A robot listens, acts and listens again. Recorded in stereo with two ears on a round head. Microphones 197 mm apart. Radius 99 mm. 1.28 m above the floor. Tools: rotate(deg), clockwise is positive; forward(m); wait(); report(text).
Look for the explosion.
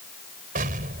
rotate(40)
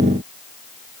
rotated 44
wait()
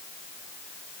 report("I heard an explosion, but can't make it out now. It was about 5° left or 95° right.")